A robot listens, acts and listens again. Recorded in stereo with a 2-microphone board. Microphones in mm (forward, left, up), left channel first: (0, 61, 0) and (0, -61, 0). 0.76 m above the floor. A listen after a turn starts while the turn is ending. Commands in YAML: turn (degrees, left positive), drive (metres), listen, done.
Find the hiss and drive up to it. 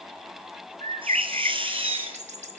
turn: -45
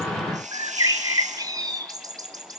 turn: -90
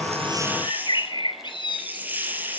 turn: -15
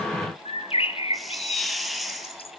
drive: 1.0
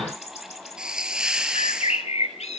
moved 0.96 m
drive: 1.0
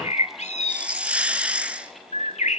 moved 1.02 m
turn: -10
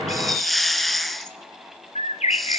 drive: 1.0
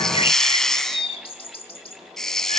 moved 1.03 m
drive: 1.0
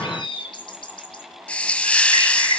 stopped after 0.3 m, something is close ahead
turn: 10
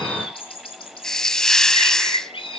done: "Arrived at the hiss, straight ahead."